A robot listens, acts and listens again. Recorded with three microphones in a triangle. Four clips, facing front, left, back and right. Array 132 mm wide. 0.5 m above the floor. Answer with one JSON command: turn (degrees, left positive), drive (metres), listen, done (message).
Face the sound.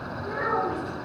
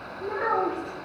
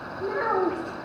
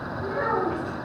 {"turn": 180}
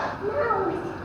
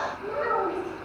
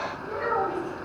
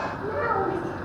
{"done": "Found it: a child speaking, straight ahead."}